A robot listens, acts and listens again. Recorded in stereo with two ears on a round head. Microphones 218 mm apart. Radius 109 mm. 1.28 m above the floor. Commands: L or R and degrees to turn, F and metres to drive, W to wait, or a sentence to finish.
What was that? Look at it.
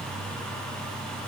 W
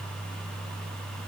W
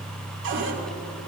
R55
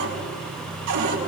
R75
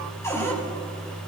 L10
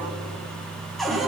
Found it: a cupboard door, straight ahead.